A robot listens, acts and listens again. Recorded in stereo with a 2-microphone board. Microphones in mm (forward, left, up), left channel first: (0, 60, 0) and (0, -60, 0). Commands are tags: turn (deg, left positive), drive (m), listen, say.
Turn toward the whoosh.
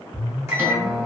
<turn deg="-60"/>
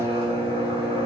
<listen/>
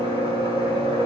<turn deg="-50"/>
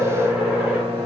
<turn deg="-15"/>
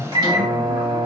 <say>Facing the whoosh, 1 to 2 m away.</say>